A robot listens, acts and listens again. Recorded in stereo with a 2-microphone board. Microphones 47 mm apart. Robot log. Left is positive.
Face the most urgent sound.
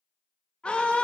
note: The scream: about 20° left or 160° left.
cmd yaw +20
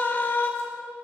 note: So it is at 135° left.
cmd yaw +135
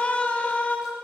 note: The scream is now 30° left.
cmd yaw +30
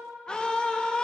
note: The scream is now 20° left.
cmd yaw +20
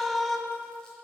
end: Facing the scream, 1 to 2 m away.